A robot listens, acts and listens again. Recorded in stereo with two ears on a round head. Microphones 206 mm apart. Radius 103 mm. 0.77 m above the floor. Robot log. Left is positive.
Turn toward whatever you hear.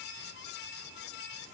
cmd idle
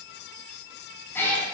cmd yaw +30
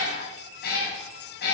note: So it is at 130° left.
cmd yaw +130
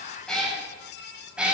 end: Facing the cat meowing.